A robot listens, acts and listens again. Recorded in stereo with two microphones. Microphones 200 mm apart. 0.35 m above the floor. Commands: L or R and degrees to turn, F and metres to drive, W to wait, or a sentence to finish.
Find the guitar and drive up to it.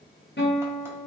L65
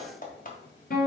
L50
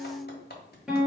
F1.0
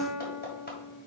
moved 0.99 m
R10
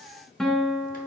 F1.0
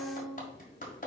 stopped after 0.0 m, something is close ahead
Arrived at the guitar, straight ahead.